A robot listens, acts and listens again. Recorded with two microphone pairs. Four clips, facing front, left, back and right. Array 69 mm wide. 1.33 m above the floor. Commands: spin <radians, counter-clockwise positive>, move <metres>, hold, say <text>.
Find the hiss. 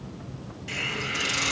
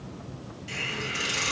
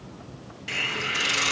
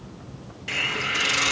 spin -2.01
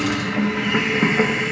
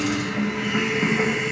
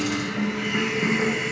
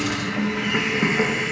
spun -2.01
spin -0.17
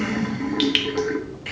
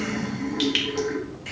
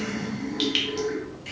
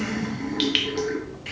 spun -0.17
say Facing the hiss.